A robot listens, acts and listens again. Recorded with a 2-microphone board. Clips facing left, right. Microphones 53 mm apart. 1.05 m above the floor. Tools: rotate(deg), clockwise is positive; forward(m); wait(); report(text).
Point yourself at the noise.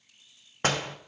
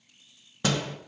rotate(-45)
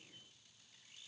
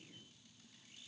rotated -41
wait()
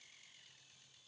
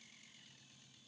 report("I heard a door slam, but can't make it out now. It was about 5° left or 95° left.")